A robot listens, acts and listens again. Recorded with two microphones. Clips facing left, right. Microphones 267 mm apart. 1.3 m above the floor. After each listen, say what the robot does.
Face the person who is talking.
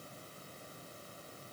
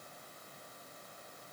Keep listening.
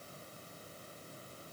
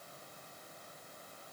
Keep listening.
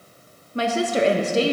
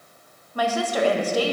Turn 25° left.
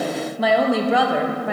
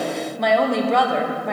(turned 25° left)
Facing the woman speaking, under 1 m away.